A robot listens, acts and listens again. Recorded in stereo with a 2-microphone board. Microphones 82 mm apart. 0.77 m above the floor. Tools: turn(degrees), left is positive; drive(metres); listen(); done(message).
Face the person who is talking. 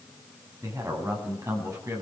turn(degrees=-40)
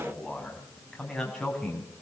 done("Found it: a man speaking, straight ahead, over 4 m away.")